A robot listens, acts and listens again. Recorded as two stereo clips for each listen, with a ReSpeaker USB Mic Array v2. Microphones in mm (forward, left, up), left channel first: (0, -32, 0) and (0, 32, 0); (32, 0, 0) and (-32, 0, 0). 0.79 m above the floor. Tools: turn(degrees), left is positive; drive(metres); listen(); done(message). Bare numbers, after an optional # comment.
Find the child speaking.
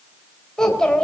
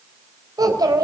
# The child speaking: 170° right.
turn(-170)
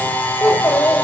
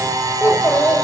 # The child speaking is now 40° right.
turn(-40)
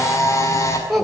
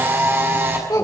done("Facing the child speaking, 2 to 4 m away.")